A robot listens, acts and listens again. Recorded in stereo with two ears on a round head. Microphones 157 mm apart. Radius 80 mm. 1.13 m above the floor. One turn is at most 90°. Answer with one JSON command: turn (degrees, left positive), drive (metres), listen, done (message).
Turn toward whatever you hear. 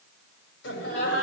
{"turn": 70}
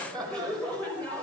{"turn": 10}
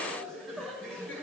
{"done": "Facing the laughter."}